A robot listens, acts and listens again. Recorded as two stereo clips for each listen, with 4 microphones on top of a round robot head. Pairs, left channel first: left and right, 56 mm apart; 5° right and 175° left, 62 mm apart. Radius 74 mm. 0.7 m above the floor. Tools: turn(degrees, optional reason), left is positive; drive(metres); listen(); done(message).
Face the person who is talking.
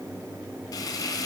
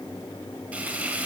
listen()
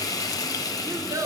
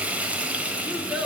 turn(degrees=-105, reason="The child speaking: 105° right.")
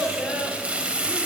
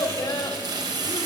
done("Found it: a child speaking, straight ahead.")